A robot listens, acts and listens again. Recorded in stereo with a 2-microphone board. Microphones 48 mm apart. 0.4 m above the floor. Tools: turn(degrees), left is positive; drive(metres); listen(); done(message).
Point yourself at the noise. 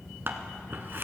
turn(degrees=-50)
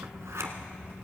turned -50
turn(degrees=-85)
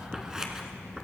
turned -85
turn(degrees=-15)
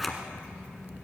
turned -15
done("Facing the scissors.")